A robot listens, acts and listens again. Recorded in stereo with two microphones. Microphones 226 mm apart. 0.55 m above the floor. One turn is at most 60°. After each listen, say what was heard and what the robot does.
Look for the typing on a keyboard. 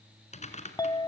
The typing on a keyboard: about 30° left or 150° left. Turn 30° left.
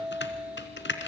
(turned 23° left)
So it is at 125° left. Turn 60° left.
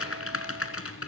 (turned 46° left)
The typing on a keyboard is now 80° left. Turn 60° left.
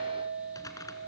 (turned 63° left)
The typing on a keyboard is now 15° left. Turn 15° left.
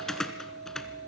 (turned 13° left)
Found it: typing on a keyboard, straight ahead.